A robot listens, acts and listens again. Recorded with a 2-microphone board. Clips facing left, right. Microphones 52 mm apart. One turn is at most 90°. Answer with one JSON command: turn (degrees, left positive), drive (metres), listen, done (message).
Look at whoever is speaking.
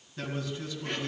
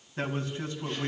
{"turn": -35}
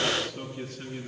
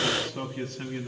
{"turn": -90}
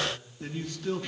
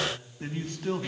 {"turn": -45}
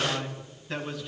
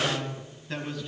{"done": "Facing the man speaking, 2 to 4 m away."}